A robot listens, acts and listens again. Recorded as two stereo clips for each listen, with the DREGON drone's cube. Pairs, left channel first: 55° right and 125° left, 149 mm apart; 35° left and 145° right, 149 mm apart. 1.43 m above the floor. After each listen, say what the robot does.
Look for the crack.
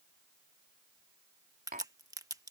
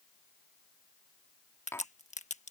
Turn 60° left.
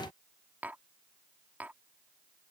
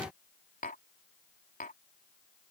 Facing where the crack came from. I can't hear it now.